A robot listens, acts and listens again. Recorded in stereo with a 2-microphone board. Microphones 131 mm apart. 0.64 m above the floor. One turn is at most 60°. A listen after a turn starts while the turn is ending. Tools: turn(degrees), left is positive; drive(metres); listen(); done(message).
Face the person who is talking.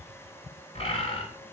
listen()
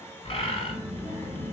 turn(degrees=-60)
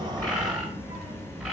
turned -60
turn(degrees=-10)
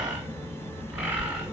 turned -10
done("Found it: a child speaking, straight ahead, 1 to 2 m away.")